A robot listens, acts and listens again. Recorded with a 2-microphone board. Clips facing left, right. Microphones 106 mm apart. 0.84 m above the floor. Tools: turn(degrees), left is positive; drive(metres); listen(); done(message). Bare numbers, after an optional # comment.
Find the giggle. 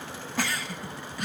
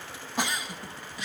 # The giggle: about 20° right or 160° right.
turn(-20)
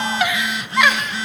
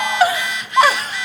# So it is at 140° right.
turn(-140)
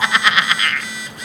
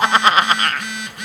# The giggle is now 45° right.
turn(-45)
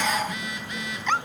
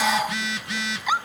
# The giggle is now 10° right.
turn(-10)
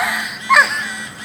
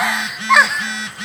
done("Facing the giggle, under 1 m away.")